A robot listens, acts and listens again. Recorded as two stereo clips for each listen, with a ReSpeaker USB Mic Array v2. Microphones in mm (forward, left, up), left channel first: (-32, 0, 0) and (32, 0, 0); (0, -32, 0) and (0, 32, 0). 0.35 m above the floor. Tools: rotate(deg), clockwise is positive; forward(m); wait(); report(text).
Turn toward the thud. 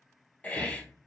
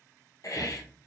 rotate(-45)
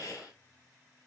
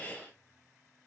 report("Facing where the thud came from. I can't hear it now.")